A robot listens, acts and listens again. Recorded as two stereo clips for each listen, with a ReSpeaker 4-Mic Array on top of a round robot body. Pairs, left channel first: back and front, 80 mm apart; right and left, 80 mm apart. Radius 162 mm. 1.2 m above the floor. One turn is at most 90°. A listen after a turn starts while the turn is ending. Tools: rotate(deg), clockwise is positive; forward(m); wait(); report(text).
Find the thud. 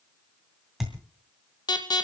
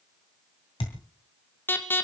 rotate(90)
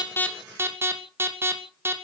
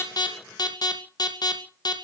report("I heard a thud from this way, but can't make it out now.")